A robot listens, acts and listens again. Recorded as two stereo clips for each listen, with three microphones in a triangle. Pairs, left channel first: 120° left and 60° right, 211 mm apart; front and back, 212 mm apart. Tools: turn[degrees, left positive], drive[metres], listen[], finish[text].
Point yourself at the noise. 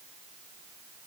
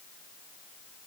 Action: listen[]
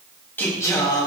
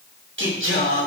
Thought: The singing: 170° right.
Action: turn[-170]
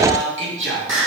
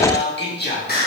Thought: The singing is now 45° right.
Action: turn[-45]
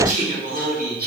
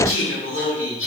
Thought: The singing is now 15° right.
Action: turn[-15]
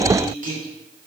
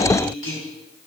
Thought: The singing is now 10° right.
Action: turn[-10]
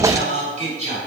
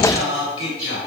Action: finish[Found it: singing, straight ahead.]